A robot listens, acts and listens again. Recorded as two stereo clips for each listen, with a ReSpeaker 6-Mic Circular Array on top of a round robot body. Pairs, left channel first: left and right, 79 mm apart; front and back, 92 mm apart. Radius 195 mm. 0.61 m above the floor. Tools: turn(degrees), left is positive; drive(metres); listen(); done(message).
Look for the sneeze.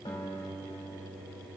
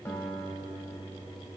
listen()
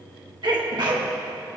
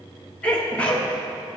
turn(degrees=-75)
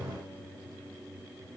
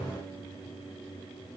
done("I heard a sneeze from this way, but can't make it out now.")